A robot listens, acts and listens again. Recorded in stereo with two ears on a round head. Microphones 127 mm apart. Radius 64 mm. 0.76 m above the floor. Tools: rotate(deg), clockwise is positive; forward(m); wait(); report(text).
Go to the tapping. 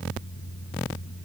wait()
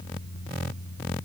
wait()
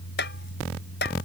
rotate(-70)
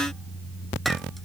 wait()
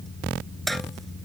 forward(1.0)
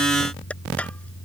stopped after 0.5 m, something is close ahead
rotate(-10)
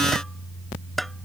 report("Something is in my way. I am facing the tapping but have not reached it.")